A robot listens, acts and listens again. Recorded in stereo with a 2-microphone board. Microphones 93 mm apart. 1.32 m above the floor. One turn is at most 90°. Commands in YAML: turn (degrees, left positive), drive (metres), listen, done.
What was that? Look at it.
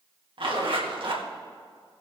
turn: -65
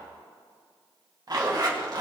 turn: -45
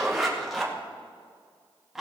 done: "Found it: a zipper, straight ahead, 2 to 4 m away."